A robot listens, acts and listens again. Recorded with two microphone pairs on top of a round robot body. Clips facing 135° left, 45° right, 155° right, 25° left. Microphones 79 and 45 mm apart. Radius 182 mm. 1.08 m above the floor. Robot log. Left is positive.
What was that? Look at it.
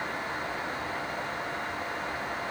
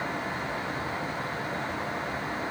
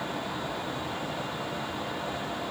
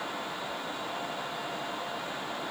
cmd idle
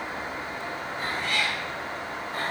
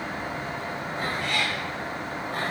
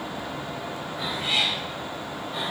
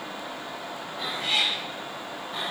note: The cat meowing: 70° right.
cmd yaw -70
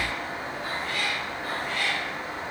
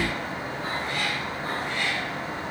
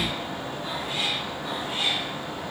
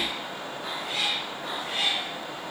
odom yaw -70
note: The cat meowing is now 25° left.
cmd yaw +25
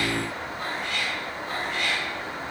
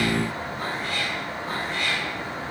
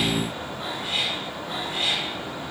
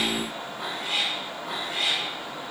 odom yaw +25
note: The cat meowing is now 10° left.
cmd yaw +10
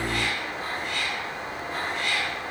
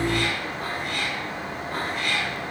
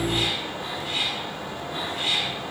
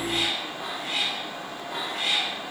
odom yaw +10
end: Facing the cat meowing, 2 to 4 m away.